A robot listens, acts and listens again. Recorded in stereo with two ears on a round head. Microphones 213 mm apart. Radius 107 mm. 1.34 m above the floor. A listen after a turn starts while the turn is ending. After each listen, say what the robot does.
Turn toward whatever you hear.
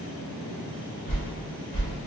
Turn 30° left.
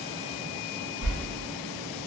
Turn 115° left.
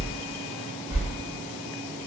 Turn 15° right.
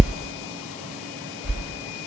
Turn 10° right.
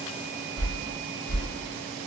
Facing the whoosh, 1 to 2 m away.